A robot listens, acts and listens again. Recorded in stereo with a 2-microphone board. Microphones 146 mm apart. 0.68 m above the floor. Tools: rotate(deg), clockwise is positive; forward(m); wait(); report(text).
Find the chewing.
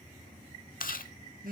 rotate(-75)
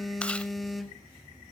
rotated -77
wait()
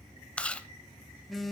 rotate(-10)
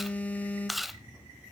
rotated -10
report("Facing the chewing.")